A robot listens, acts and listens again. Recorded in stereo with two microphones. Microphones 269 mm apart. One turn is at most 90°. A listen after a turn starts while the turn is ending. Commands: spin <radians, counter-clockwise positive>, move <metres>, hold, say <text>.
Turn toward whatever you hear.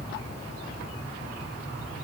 hold
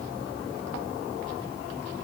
hold
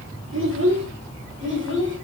spin -0.79
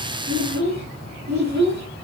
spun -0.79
spin -1.48
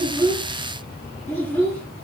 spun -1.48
spin 0.17
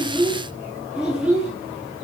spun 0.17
say Found it: a child speaking, straight ahead, over 4 m away.